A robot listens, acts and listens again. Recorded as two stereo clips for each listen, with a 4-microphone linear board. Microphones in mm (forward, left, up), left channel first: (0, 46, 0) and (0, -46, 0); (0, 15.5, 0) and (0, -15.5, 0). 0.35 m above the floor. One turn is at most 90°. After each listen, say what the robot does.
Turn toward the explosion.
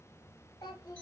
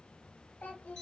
Keep listening.
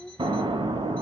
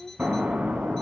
Turn 75° right.
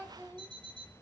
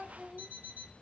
Keep listening.
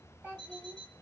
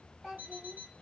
I heard an explosion, but can't make it out now. It was about straight ahead or 30° right.